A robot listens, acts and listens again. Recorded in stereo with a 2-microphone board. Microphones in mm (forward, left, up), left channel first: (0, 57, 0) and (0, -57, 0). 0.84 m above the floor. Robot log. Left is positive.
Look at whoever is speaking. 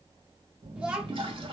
cmd yaw -30
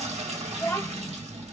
note: So it is at 20° left.
cmd yaw +20
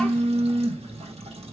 cmd idle
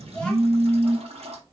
cmd idle
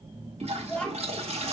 note: The child speaking is now 10° left.
cmd yaw +10
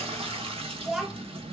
end: Facing the child speaking.